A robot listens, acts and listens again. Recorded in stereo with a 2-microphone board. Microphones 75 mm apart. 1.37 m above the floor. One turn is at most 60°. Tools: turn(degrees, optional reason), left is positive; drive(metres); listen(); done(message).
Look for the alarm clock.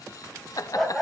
listen()
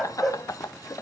listen()
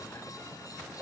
done("I can't make out an alarm clock to turn to.")